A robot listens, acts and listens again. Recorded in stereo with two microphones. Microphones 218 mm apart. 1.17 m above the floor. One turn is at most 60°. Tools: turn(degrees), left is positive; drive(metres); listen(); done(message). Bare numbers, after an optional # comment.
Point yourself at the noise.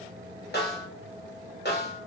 # The snare drum: about 50° left or 130° left.
turn(50)
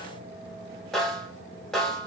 done("Facing the snare drum, under 1 m away.")